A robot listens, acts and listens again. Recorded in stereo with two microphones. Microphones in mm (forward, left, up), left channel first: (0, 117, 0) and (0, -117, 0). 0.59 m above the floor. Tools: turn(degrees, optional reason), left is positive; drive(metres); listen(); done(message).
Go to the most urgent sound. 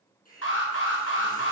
turn(degrees=90)
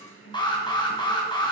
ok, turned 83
turn(degrees=20, reason="So it is at 20° left.")
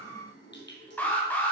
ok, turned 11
turn(degrees=10, reason="The alarm is now 10° left.")
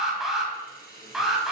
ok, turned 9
drive(metres=1.0)
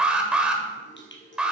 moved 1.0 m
drive(metres=1.0)
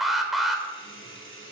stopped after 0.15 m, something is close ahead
done("Arrived at the alarm, straight ahead.")